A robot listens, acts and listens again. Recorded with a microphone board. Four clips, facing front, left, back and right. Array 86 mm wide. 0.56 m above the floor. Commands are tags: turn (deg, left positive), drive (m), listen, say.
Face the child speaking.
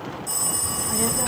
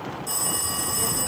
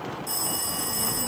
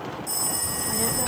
<turn deg="-30"/>
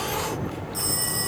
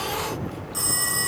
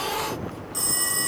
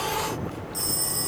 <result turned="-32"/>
<say>Facing the child speaking, under 1 m away.</say>